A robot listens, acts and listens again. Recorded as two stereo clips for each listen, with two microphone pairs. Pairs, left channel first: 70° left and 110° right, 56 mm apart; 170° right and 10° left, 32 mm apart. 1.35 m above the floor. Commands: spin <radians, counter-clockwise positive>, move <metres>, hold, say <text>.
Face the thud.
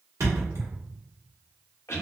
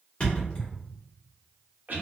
spin -2.01
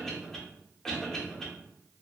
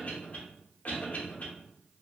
say Facing where the thud came from. I can't hear it now.